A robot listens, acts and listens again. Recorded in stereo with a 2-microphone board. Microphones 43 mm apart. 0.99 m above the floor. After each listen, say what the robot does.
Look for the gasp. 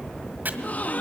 Turn 35° left.
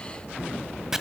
Keep listening.
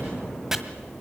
I heard a gasp, but can't make it out now. It was about straight ahead or 110° left.